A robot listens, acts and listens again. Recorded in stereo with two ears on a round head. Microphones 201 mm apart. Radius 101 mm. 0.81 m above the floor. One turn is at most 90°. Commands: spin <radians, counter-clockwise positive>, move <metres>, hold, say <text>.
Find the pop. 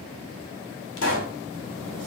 spin 1.05
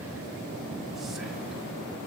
hold
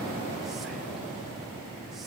say I heard a pop, but can't make it out now. It was about straight ahead or 60° left.